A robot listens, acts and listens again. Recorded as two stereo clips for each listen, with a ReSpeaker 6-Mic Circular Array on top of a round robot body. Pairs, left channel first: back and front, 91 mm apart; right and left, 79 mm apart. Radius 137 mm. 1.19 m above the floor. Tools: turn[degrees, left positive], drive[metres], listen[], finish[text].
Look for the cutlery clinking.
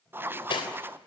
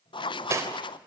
Thought: The cutlery clinking: 145° left.
Action: turn[145]
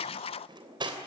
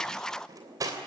Thought: The cutlery clinking is now 40° left.
Action: turn[40]
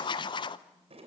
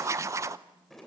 Action: listen[]
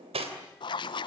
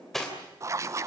Action: finish[Found it: cutlery clinking, straight ahead, 2 to 4 m away.]